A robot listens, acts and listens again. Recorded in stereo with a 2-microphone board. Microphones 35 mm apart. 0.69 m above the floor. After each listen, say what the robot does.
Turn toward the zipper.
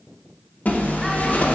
Turn 50° left.
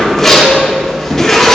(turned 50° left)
Found it: a zipper, straight ahead.